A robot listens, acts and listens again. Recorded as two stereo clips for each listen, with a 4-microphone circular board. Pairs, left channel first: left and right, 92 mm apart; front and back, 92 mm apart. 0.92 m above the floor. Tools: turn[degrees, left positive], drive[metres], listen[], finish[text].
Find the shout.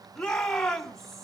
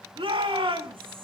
Thought: The shout: 175° left.
Action: turn[175]
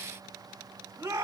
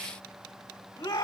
Thought: The shout is now 30° right.
Action: turn[-30]
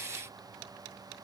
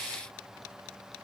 Action: listen[]
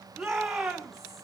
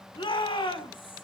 Action: finish[Found it: a shout, straight ahead, 2 to 4 m away.]